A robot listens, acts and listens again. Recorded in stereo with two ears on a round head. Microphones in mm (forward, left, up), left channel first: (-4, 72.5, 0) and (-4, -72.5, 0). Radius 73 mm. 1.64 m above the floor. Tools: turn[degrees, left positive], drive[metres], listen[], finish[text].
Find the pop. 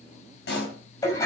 Thought: The pop: about 65° left or 115° left.
Action: turn[65]
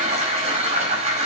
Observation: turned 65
Action: listen[]
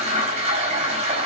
Action: finish[I heard a pop, but can't make it out now. It was about straight ahead or 50° left.]